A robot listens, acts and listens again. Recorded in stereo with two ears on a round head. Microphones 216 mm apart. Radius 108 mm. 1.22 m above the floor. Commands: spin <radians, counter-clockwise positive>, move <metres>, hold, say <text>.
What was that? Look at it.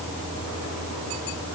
hold
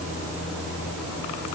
hold
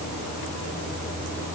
say I can't make out anything to turn to.